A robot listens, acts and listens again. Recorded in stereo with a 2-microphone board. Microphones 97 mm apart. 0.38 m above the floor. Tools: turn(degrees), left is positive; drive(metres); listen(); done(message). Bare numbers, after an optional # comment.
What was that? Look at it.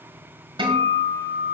# The guitar: about 60° right or 120° right.
turn(-60)
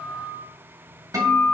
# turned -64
# So it is at 40° right.
turn(-40)
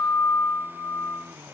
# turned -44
done("Found it: a guitar, straight ahead, 1 to 2 m away.")